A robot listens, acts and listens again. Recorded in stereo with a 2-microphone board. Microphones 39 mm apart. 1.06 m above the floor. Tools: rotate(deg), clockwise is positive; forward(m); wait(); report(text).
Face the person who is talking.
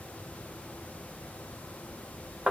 wait()
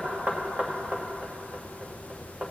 wait()
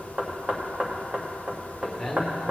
rotate(30)
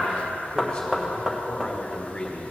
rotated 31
rotate(-25)
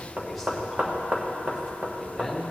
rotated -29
report("Found it: a man speaking, straight ahead, 1 to 2 m away.")